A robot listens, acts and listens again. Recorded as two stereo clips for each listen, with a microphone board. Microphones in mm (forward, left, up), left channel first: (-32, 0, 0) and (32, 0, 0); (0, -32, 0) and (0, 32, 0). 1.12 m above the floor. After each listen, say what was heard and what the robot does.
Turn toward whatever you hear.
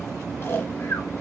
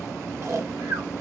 The snoring: 130° left. Turn 130° left.
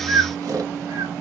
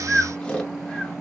The snoring is now 15° right. Turn 15° right.
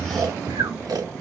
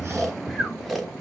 Found it: snoring, straight ahead, under 1 m away.